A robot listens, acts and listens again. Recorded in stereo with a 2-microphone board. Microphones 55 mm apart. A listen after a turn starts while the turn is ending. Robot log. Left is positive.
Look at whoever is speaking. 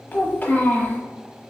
note: The child speaking: about 35° left or 145° left.
cmd yaw +35
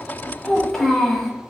end: Facing the child speaking.